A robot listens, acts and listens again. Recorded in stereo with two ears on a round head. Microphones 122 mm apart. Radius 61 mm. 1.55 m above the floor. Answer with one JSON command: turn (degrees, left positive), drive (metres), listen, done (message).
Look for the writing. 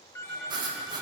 {"turn": -30}
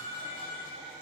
{"listen": true}
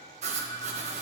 {"turn": -115}
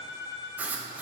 {"turn": -15}
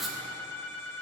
{"done": "Found it: writing, straight ahead, 1 to 2 m away."}